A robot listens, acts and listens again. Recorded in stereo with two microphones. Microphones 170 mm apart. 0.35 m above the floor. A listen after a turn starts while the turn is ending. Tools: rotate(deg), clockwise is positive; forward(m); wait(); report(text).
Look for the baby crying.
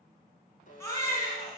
rotate(-15)
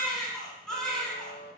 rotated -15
report("Facing the baby crying, 2 to 4 m away.")